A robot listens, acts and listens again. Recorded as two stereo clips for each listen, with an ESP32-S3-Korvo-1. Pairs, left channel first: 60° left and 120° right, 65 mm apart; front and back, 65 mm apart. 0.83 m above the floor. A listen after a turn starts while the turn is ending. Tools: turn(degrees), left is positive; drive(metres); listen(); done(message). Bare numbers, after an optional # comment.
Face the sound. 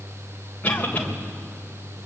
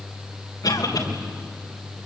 done("Found it: a cough, straight ahead, 2 to 4 m away.")